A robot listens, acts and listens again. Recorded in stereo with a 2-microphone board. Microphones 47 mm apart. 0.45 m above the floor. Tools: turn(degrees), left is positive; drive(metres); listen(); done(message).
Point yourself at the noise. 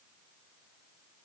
listen()
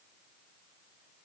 listen()
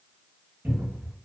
turn(degrees=-40)
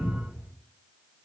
turn(degrees=-100)
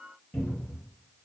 turn(degrees=20)
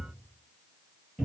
done("Found it: a cupboard door, straight ahead, 1 to 2 m away.")